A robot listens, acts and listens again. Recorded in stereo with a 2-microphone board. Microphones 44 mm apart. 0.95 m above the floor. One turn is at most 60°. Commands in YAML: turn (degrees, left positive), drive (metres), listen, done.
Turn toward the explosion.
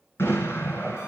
turn: 60
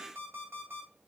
listen: true
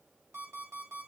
done: "I heard an explosion, but can't make it out now. It was about 15° left or 45° left."